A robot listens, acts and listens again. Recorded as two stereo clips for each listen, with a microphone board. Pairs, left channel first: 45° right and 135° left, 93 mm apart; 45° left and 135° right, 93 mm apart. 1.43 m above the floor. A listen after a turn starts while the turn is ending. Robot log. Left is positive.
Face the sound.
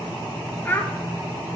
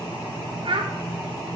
note: The child speaking: 115° right.
cmd yaw -115
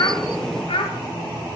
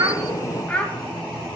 note: The child speaking is now 30° right.
cmd yaw -30
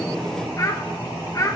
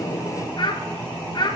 note: The child speaking is now 10° left.
cmd yaw +10
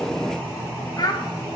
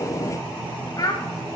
end: Found it: a child speaking, straight ahead, under 1 m away.